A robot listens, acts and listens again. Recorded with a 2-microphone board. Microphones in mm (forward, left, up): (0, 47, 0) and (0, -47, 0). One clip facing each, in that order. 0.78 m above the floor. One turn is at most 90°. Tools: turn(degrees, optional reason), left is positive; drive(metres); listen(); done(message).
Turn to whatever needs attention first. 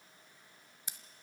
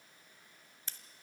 listen()
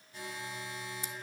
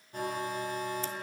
turn(degrees=-55, reason="The alarm: about 55° right or 125° right.")
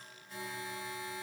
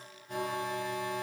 turn(degrees=-70, reason="So it is at 70° right.")
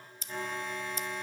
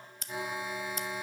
turn(degrees=-10, reason="The alarm is now 10° right.")
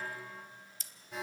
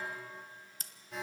done("Found it: an alarm, straight ahead, 1 to 2 m away.")